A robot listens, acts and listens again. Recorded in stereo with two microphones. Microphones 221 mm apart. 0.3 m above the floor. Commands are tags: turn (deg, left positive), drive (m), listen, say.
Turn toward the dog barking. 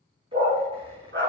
<turn deg="-65"/>
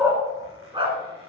<turn deg="-25"/>
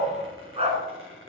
<turn deg="-30"/>
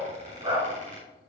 <turn deg="-25"/>
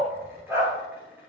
<turn deg="-15"/>
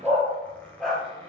<say>Found it: a dog barking, straight ahead, 2 to 4 m away.</say>